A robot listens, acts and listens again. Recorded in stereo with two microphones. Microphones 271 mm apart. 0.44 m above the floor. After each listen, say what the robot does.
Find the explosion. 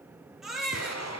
Turn 70° left.
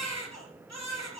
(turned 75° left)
Keep listening.
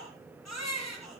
I heard an explosion, but can't make it out now. It was about 5° right or 35° left.